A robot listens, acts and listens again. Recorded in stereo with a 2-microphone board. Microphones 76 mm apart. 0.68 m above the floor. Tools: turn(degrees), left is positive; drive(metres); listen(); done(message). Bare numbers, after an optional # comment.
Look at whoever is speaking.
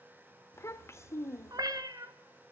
# The child speaking: about 40° left or 140° left.
turn(40)
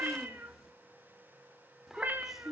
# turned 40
done("Found it: a child speaking, straight ahead, under 1 m away.")